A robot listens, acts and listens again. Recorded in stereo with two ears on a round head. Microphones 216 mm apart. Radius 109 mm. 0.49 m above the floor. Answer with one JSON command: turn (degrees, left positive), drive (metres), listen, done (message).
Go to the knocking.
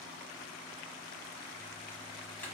{"listen": true}
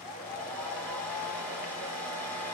{"listen": true}
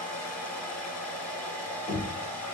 {"turn": 45}
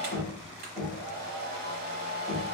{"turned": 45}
{"drive": 1.0}
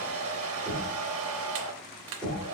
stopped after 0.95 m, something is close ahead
{"done": "Arrived at the knocking, straight ahead."}